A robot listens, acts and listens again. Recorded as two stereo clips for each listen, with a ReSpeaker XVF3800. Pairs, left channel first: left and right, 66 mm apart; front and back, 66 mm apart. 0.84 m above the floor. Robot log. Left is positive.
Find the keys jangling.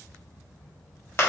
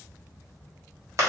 cmd idle
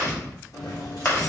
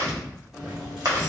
note: The keys jangling: 100° left.
cmd yaw +100
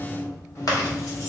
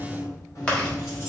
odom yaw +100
note: The keys jangling is now 50° left.
cmd yaw +50
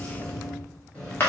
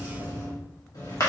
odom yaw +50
note: The keys jangling is now 20° left.
cmd yaw +20
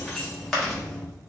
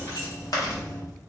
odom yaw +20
end: Found it: keys jangling, straight ahead.